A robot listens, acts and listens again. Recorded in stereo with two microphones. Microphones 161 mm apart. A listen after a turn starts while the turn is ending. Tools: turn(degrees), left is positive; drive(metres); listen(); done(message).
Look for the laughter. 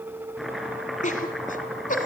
turn(degrees=55)
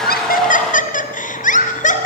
turn(degrees=50)
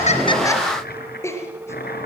turn(degrees=15)
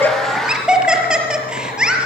done("Facing the laughter, over 4 m away.")